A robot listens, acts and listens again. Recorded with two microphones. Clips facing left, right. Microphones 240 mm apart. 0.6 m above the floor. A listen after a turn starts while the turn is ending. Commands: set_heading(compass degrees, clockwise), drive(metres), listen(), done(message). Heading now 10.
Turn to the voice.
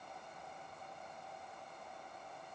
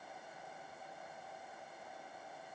listen()
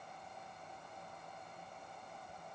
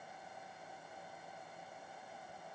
listen()
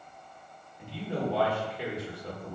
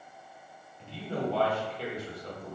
set_heading(340)
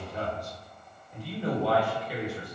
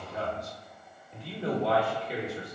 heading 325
set_heading(355)
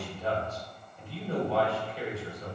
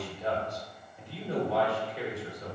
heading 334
set_heading(354)
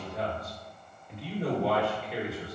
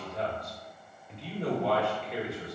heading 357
done("Facing the man speaking.")